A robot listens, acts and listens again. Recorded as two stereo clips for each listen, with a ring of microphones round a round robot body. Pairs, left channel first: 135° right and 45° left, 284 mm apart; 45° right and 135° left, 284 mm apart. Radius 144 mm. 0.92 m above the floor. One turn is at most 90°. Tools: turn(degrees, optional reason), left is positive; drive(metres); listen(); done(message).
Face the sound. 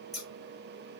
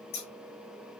turn(degrees=-45, reason="The scissors: 45° right.")
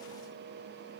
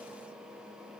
listen()
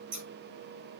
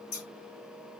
turn(degrees=20, reason="The scissors is now 20° left.")
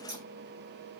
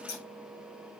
done("Facing the scissors, over 4 m away.")